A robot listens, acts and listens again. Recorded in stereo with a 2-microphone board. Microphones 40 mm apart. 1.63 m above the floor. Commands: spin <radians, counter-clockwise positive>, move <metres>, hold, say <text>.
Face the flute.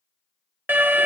hold
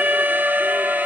hold
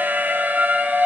say I can't make out a flute to turn to.